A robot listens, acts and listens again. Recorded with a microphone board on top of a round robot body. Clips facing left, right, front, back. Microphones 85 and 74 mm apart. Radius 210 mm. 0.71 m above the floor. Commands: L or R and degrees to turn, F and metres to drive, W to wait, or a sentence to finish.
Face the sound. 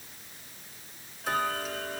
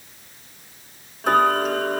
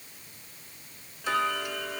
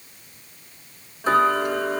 R130
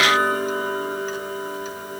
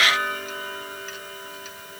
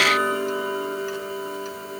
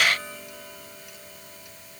L30
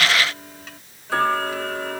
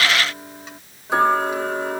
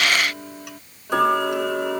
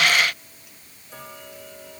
R20
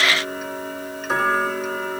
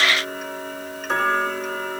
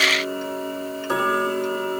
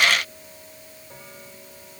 Found it: ticking, straight ahead.